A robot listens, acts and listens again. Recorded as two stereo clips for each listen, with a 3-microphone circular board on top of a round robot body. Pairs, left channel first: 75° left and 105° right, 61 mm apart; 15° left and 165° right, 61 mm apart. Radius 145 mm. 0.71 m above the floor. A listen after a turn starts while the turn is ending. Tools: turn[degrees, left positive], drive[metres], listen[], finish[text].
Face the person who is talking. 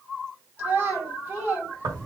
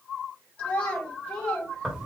Thought: The child speaking: 50° right.
Action: turn[-50]
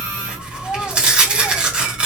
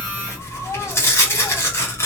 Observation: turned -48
Action: listen[]
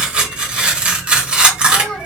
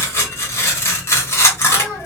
Action: listen[]
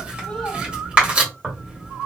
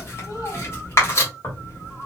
Action: finish[Facing where the child speaking came from. I can't hear it now.]